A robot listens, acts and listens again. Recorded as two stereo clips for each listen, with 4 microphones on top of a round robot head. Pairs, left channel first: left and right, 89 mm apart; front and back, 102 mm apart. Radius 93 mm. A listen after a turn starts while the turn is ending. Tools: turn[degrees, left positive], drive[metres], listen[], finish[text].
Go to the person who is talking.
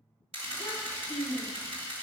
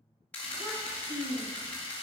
Thought: The child speaking: 175° left.
Action: turn[175]
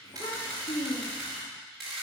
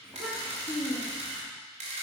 Thought: The child speaking is now 80° left.
Action: turn[80]
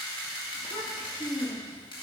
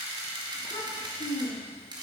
Thought: The child speaking is now 35° left.
Action: turn[35]
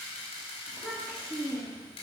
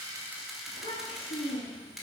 Thought: The child speaking is now 10° right.
Action: turn[-10]
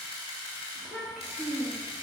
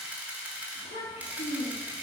Action: drive[1.0]
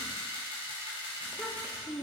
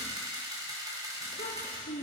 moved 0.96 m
Action: drive[1.0]
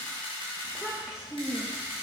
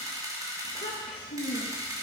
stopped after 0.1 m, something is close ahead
Action: finish[Arrived at the child speaking, straight ahead.]